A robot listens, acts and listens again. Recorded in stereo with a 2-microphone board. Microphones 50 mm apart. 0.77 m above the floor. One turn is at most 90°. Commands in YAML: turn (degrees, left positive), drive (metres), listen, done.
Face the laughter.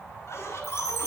turn: 65
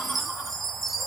listen: true
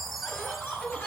turn: 40
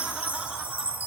listen: true
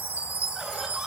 listen: true
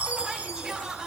done: "Facing the laughter, over 4 m away."